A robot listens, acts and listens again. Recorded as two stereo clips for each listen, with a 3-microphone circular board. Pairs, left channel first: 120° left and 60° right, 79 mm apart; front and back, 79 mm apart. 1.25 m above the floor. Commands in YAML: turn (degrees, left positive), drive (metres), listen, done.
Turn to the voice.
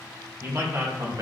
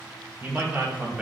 turn: -110
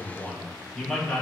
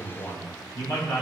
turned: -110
turn: 40
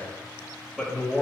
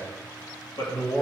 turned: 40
turn: 25
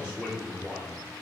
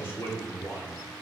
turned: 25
turn: 20
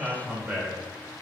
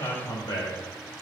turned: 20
done: "Found it: a man speaking, straight ahead."